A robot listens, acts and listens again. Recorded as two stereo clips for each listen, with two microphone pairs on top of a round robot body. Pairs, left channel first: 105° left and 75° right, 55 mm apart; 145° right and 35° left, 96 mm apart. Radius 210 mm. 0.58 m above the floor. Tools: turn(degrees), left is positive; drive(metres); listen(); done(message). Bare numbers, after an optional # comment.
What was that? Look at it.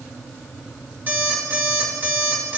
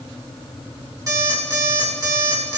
# The alarm clock: 20° right.
turn(-20)
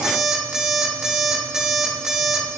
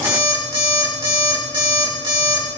done("Found it: an alarm clock, straight ahead, 2 to 4 m away.")